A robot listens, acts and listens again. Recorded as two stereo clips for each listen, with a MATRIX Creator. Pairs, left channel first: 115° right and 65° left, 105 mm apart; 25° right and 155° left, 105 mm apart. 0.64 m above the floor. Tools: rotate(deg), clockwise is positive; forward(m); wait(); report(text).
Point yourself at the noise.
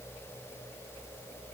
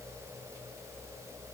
wait()
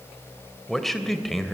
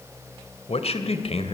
rotate(25)
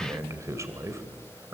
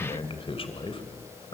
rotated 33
report("Facing the man speaking.")